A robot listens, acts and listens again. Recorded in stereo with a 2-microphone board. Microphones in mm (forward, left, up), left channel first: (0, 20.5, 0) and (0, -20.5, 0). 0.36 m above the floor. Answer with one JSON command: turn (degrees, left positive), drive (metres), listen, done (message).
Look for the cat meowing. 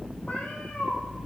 {"turn": 40}
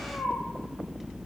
{"turn": 105}
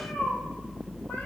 {"turn": 45}
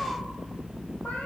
{"turn": 40}
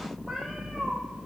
{"done": "Found it: a cat meowing, straight ahead."}